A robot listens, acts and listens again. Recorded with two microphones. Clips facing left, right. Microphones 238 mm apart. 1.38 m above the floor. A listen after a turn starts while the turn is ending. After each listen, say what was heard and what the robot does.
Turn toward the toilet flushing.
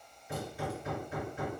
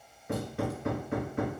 Keep listening.
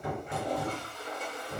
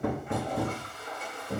The toilet flushing: about 40° left or 140° left. Turn 40° left.
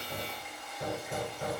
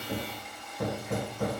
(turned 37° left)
Facing the toilet flushing.